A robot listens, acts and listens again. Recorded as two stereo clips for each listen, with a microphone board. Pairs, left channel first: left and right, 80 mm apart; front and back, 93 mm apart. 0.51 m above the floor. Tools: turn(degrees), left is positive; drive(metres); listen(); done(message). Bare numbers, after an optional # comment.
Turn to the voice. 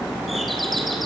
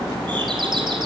listen()
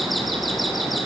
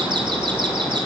listen()
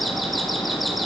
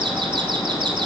done("I can't make out anyone speaking.")